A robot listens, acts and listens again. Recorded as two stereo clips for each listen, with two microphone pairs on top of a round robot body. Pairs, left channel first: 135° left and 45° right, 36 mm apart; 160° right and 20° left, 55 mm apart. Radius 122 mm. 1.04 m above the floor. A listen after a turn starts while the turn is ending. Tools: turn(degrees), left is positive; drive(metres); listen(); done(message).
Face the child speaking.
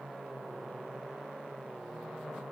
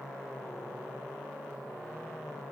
listen()
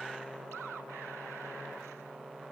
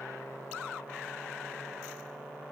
listen()
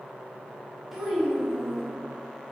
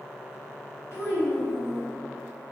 turn(degrees=-120)
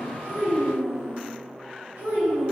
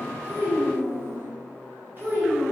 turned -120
turn(degrees=-30)
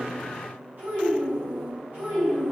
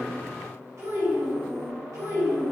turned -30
done("Found it: a child speaking, straight ahead, 2 to 4 m away.")